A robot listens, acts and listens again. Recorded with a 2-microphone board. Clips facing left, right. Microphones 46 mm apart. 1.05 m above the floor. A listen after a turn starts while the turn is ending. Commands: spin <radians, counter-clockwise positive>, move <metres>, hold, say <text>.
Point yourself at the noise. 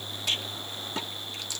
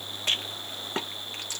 spin -0.61
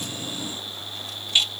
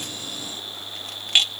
spin -1.83
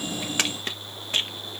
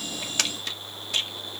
spin 0.61
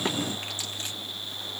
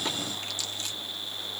hold
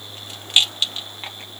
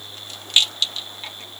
spin 0.52
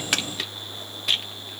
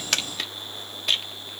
say Found it: a rattle, straight ahead.